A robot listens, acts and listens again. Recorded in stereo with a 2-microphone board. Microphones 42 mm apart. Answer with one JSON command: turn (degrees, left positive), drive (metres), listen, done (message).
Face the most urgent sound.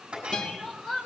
{"turn": 30}
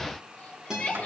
{"turn": 140}
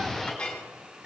{"listen": true}
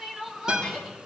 {"turn": -10}
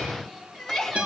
{"done": "Found it: crying, straight ahead, 2 to 4 m away."}